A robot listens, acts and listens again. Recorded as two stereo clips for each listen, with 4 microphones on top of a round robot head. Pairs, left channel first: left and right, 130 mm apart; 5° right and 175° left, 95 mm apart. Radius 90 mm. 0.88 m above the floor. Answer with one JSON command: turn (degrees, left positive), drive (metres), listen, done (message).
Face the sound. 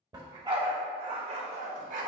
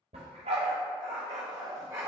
{"turn": -115}
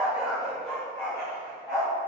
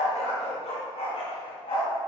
{"turn": 25}
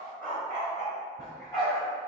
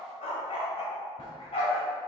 {"turn": 20}
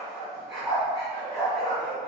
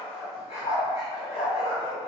{"done": "Found it: a dog barking, straight ahead, 2 to 4 m away."}